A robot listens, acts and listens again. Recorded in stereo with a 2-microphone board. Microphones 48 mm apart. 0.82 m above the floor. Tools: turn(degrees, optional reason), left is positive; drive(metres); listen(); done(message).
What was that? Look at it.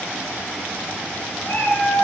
turn(degrees=90)
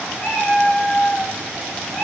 turn(degrees=15, reason="So it is at 15° left.")
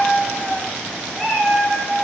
done("Found it: a cat meowing, straight ahead, 2 to 4 m away.")